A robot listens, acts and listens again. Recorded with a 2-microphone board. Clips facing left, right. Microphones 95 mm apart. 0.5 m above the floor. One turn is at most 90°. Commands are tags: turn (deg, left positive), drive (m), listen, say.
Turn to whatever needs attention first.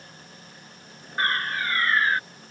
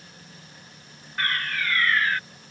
<turn deg="30"/>
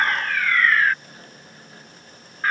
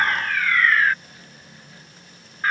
<say>Found it: a fire alarm, straight ahead.</say>